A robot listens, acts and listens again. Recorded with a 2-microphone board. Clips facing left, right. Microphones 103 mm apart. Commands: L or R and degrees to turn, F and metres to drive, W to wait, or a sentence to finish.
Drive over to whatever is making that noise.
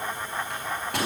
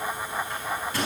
L65
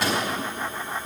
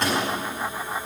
F1.0
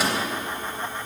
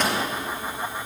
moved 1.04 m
L10
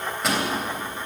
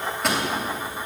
F1.0
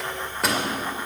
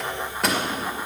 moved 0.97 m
F1.0
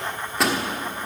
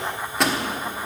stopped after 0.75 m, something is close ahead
Arrived at the microwave, straight ahead.